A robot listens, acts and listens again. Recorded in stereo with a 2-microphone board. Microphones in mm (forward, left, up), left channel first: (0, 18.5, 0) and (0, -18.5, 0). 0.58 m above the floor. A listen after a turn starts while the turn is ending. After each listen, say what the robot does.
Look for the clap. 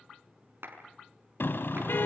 Turn 90° right.
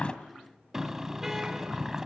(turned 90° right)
Keep listening.
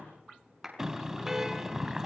Facing the clap, over 4 m away.